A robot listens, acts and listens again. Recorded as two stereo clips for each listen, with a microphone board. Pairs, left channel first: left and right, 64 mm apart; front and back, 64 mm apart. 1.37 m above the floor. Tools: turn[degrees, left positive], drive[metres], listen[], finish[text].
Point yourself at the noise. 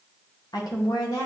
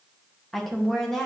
Thought: The woman speaking: 80° left.
Action: turn[80]
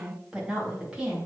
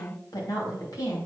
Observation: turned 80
Thought: The woman speaking is now 15° right.
Action: turn[-15]
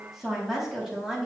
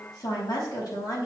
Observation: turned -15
Thought: The woman speaking is now 10° right.
Action: turn[-10]
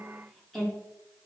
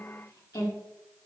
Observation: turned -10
Action: finish[Facing the woman speaking.]